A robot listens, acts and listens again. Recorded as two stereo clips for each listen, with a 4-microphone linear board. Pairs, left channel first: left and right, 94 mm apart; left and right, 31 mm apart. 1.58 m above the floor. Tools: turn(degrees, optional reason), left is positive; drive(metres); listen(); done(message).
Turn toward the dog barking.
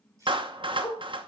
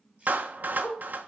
turn(degrees=40, reason="The dog barking: about 40° left or 140° left.")
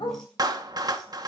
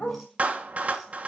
turn(degrees=90, reason="So it is at 90° left.")
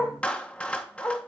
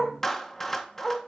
turn(degrees=25, reason="The dog barking is now 25° left.")
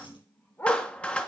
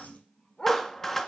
turn(degrees=30, reason="The dog barking is now 30° left.")
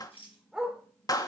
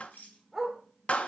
done("Facing the dog barking, 1 to 2 m away.")